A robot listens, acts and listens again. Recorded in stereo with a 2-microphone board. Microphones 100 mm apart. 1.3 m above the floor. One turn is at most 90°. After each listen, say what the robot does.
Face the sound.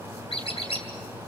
Turn 65° left.
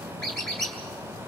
Found it: a squeak, straight ahead, 2 to 4 m away.